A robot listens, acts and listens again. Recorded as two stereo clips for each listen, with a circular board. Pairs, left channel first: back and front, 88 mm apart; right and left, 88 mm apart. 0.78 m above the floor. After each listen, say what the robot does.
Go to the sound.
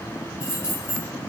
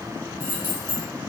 Turn 75° right.
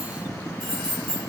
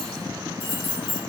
Turn 20° right.
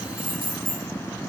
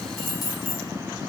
Drive 1.0 m forward.
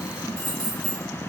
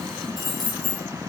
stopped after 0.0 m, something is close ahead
Something is in my way. I am facing the keys jangling but have not reached it.